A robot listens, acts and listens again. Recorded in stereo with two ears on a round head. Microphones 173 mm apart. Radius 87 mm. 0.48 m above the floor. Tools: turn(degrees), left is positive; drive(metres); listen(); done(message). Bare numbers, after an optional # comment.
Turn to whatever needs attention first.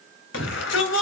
# The shout: about 70° left or 110° left.
turn(70)
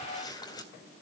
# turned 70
listen()
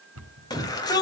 # So it is at 20° left.
turn(20)
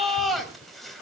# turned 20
done("Found it: a shout, straight ahead.")